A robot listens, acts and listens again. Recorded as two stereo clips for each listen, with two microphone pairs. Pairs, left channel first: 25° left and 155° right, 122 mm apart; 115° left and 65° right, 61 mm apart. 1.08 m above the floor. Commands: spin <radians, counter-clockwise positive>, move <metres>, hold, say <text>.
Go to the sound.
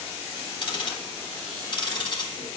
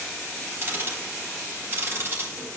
spin -0.35
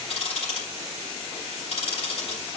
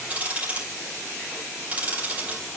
move 1.0
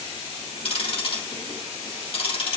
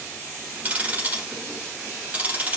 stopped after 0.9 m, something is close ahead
say Something is in my way. I am facing the ticking but have not reached it.